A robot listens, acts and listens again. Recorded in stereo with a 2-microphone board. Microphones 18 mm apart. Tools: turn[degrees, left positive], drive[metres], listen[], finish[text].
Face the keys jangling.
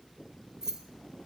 Thought: The keys jangling: about 35° right or 145° right.
Action: turn[-35]
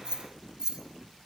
Thought: So it is at 135° right.
Action: turn[-135]
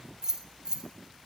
Thought: The keys jangling is now 40° right.
Action: turn[-40]
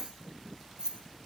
Thought: The keys jangling is now 50° right.
Action: turn[-50]
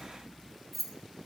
Action: finish[Found it: keys jangling, straight ahead, 1 to 2 m away.]